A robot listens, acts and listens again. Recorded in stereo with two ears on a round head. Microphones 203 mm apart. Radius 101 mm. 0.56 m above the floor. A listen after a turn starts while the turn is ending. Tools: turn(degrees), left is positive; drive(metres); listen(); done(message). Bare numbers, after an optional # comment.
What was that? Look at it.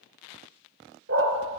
# The dog barking: about 55° right or 125° right.
turn(-55)
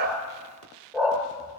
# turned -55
done("Facing the dog barking.")